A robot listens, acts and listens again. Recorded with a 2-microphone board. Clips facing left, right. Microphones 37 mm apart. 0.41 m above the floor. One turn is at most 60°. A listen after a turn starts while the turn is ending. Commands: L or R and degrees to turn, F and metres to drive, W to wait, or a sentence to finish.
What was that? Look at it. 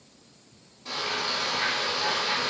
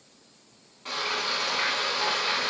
R55
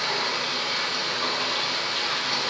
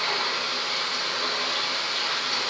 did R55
Facing the frying, 1 to 2 m away.